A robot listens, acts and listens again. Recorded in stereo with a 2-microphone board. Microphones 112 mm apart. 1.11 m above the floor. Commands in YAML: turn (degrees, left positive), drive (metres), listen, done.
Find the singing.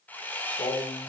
turn: 75
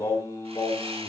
turn: 25
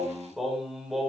done: "Facing the singing."